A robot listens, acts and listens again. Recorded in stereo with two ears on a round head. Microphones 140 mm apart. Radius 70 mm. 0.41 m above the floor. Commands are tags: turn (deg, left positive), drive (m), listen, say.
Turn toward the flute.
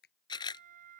<turn deg="-60"/>
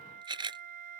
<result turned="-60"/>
<turn deg="-60"/>
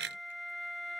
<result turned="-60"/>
<say>Found it: a flute, straight ahead.</say>